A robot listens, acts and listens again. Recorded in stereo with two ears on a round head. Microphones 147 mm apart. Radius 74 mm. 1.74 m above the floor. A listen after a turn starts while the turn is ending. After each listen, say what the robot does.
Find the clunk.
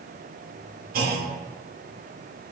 Turn 60° right.
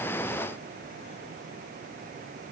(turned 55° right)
Keep listening.
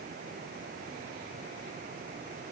I heard a clunk, but can't make it out now. It was about 5° right or 65° right.